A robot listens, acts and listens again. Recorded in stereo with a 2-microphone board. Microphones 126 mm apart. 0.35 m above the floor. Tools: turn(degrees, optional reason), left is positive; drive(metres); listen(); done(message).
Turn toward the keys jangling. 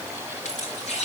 turn(degrees=60, reason="The keys jangling: about 60° left or 120° left.")
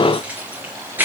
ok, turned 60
turn(degrees=-15, reason="So it is at 15° right.")
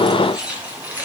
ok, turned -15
turn(degrees=-10, reason="The keys jangling is now 10° right.")
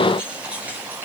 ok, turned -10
turn(degrees=-10, reason="The keys jangling is now 10° right.")
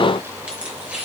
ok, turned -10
turn(degrees=-10, reason="The keys jangling is now 10° right.")
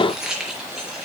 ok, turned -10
done("Facing the keys jangling.")